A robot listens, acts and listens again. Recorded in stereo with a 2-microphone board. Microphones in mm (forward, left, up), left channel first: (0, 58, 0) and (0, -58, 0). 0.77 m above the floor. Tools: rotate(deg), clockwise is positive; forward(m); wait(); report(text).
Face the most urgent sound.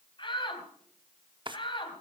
rotate(-45)
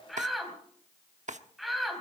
report("Found it: a shout, straight ahead, over 4 m away.")